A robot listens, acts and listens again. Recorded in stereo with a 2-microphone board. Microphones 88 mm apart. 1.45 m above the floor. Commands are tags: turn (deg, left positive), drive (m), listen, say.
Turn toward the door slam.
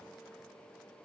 <listen/>
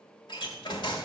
<turn deg="55"/>
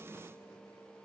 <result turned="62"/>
<listen/>
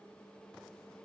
<say>I heard a door slam, but can't make it out now. It was about 5° right or 60° left.</say>